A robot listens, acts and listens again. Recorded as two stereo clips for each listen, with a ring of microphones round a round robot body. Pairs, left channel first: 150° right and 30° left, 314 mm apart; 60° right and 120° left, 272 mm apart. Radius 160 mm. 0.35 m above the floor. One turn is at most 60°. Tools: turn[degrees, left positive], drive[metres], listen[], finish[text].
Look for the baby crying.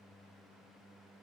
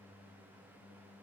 Action: listen[]
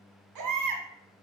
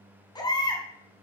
Thought: The baby crying: 15° left.
Action: turn[15]
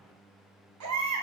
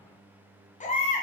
Action: finish[Facing the baby crying.]